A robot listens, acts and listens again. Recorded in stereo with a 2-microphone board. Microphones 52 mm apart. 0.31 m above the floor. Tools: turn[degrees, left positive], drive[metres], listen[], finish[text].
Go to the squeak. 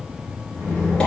Action: turn[30]
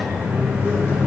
Action: listen[]
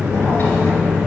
Thought: So it is at 135° left.
Action: turn[135]
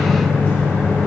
Action: listen[]
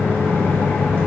Action: listen[]
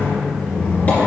Thought: The squeak is now 35° left.
Action: turn[35]
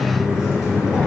Action: drive[1.0]
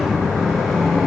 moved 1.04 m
Action: drive[1.0]
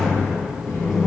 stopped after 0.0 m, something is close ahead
Action: listen[]
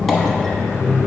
Action: finish[Arrived at the squeak, straight ahead.]